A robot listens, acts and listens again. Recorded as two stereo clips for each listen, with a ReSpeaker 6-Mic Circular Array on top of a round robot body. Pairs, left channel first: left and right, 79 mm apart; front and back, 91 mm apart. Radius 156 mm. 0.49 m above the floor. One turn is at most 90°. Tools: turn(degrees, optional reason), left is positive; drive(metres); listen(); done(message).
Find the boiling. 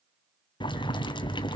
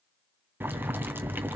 turn(degrees=90, reason="The boiling: 110° left.")
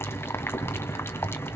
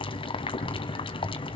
turn(degrees=30, reason="The boiling is now 30° left.")
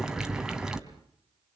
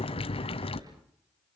turn(degrees=-10, reason="The boiling is now 10° right.")
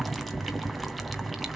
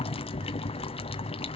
done("Found it: boiling, straight ahead, 2 to 4 m away.")